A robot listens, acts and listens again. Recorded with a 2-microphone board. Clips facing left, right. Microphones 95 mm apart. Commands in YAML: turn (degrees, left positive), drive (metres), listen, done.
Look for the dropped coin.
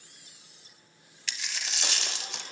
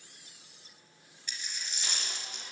turn: 90
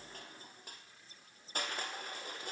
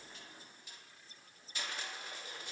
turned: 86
done: "Facing where the dropped coin came from. I can't hear it now."